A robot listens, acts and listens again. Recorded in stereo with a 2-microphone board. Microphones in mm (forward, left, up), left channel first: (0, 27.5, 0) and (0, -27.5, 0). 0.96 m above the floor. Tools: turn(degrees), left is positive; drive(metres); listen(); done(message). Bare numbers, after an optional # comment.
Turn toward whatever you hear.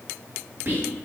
# The whispering: about 45° right or 135° right.
turn(-45)
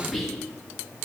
done("Facing the whispering.")